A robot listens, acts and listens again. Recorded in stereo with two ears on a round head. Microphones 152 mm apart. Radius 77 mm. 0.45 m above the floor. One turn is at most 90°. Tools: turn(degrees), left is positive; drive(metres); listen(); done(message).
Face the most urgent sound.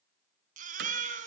turn(degrees=-50)
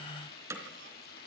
listen()
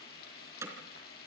listen()
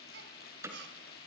done("I heard a baby crying, but can't make it out now. It was about straight ahead or 80° right.")